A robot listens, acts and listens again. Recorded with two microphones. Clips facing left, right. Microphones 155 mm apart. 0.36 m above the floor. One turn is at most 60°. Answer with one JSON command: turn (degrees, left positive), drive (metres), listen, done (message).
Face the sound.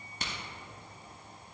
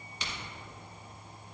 {"turn": 50}
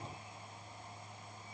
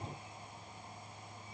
{"listen": true}
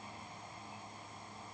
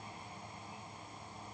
{"done": "I heard a crack, but can't make it out now. It was about straight ahead or 80° left."}